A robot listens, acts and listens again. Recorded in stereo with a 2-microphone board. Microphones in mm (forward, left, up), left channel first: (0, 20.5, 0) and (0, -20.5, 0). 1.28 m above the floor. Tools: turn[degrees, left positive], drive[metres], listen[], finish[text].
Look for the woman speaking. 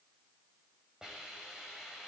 Action: listen[]
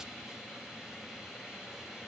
Action: listen[]
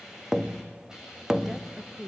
Thought: The woman speaking: about 20° right or 160° right.
Action: turn[-20]
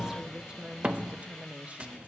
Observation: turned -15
Thought: The woman speaking: about 30° right or 150° right.
Action: turn[-30]
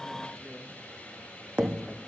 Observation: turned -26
Action: listen[]
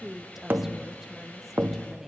Action: finish[Facing the woman speaking, 1 to 2 m away.]